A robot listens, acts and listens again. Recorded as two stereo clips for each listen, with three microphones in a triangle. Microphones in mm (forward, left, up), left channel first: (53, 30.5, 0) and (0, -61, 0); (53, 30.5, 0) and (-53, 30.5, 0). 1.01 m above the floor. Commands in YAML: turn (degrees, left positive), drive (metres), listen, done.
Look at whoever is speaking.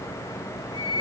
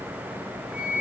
listen: true
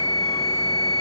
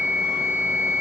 listen: true
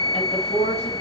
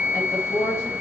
turn: 65
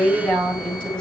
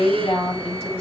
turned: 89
turn: -20
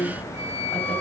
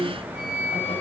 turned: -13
turn: -10
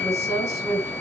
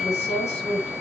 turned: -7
done: "Facing the woman speaking."